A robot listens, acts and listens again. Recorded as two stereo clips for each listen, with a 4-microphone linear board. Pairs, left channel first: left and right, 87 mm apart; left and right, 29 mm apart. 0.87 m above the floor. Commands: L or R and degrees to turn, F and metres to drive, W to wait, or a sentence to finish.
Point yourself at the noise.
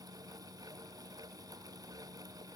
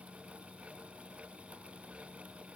W
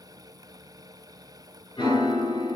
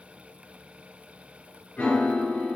L60
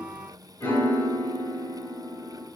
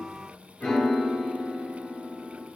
L30
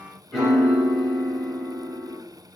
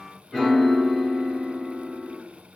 Found it: a piano, straight ahead.